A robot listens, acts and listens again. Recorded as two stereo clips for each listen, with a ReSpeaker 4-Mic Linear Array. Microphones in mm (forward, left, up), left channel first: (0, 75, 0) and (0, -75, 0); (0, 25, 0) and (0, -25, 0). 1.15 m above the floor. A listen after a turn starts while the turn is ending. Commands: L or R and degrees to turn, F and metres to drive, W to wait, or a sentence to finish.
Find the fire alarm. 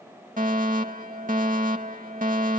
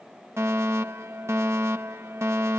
R65
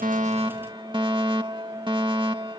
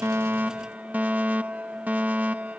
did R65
R35
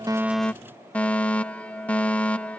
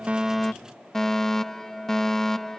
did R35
L10
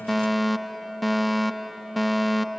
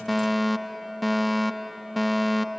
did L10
Facing the fire alarm.